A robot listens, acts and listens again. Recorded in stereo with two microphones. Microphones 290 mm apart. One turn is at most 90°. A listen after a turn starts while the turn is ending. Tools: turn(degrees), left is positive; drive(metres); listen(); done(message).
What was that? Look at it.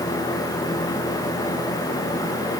listen()
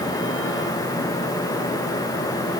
listen()
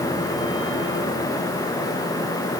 done("I can't make out anything to turn to.")